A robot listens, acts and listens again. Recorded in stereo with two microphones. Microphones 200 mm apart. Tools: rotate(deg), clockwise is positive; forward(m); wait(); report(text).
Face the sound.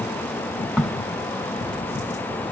rotate(-30)
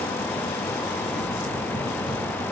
wait()
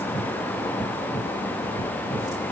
report("I heard a crack, but can't make it out now. It was about 30° right or 150° left.")